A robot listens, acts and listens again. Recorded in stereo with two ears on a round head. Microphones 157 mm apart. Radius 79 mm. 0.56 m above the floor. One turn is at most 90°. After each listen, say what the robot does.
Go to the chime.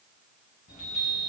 Turn 45° left.
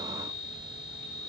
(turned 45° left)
Turn 90° left.
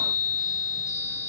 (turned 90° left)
Drive 1.0 m forward.
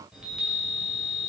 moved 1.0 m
Drive 1.0 m forward.
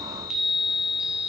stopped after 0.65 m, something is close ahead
I am next to the chime.